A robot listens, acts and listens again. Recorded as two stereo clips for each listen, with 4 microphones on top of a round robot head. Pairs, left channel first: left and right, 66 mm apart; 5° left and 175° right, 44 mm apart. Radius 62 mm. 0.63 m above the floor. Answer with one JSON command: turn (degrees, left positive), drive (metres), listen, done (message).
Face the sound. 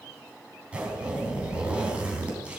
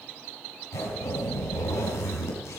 {"turn": -20}
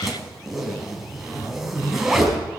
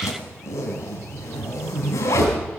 {"done": "Found it: a zipper, straight ahead, 2 to 4 m away."}